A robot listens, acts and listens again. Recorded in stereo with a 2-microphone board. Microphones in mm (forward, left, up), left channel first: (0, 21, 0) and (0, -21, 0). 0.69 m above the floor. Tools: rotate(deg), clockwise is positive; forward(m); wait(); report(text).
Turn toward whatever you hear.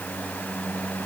wait()
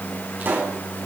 rotate(50)
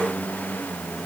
wait()
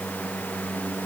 report("I heard a pop, but can't make it out now. It was about straight ahead or 80° right.")